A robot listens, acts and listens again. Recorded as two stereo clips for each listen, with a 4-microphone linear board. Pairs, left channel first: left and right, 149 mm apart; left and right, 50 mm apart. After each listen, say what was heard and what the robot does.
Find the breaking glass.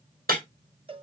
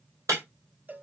Turn 90° right.
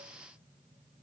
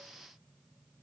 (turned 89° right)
Facing where the breaking glass came from. I can't hear it now.